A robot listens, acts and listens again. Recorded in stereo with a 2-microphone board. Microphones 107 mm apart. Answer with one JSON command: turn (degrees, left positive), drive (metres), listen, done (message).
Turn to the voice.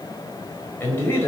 {"turn": 25}
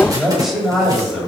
{"done": "Facing the man speaking, over 4 m away."}